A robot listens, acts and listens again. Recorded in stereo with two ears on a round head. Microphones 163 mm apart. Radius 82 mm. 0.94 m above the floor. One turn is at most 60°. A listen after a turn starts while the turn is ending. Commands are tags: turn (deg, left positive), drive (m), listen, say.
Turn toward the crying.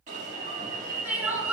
<turn deg="-30"/>
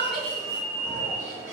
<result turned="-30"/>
<listen/>
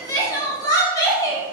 <turn deg="20"/>
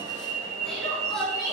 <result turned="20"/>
<say>Facing the crying.</say>